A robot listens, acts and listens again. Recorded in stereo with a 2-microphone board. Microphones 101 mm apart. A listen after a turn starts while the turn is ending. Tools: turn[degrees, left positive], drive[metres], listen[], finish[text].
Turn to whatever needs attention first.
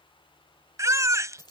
Thought: The baby crying: about 30° right or 150° right.
Action: turn[-30]
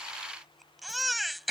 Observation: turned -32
Action: finish[Facing the baby crying.]